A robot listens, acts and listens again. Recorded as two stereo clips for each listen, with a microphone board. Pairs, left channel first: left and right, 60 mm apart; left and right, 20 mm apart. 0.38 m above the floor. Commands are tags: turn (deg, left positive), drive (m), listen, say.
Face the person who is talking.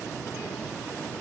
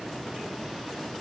<listen/>
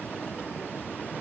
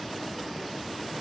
<listen/>
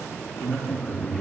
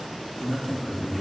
<turn deg="30"/>
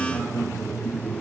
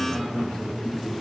<turn deg="135"/>
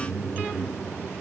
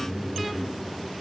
<turn deg="45"/>
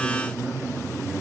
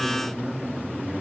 <turn deg="-30"/>
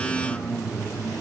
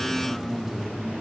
<say>Found it: a man speaking, straight ahead.</say>